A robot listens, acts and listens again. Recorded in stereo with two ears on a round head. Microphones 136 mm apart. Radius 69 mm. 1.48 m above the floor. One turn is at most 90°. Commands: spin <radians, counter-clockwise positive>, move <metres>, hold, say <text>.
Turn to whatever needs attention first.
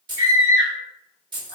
spin 0.35
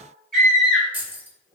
say Found it: a scream, straight ahead.